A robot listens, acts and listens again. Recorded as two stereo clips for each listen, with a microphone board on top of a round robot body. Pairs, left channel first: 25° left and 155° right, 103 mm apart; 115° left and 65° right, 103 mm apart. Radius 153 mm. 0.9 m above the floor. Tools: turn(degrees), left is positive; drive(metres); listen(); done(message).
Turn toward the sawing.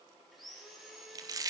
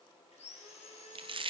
turn(degrees=115)
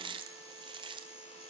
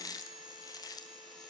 turn(degrees=20)
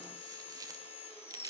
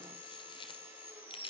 done("Facing the sawing, over 4 m away.")